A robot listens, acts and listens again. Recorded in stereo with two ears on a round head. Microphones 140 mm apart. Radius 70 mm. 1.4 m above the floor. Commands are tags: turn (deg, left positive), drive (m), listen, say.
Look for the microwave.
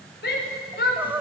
<listen/>
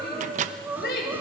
<turn deg="-50"/>
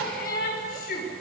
<listen/>
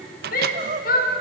<turn deg="-75"/>
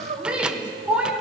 <listen/>
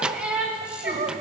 <say>Facing the microwave.</say>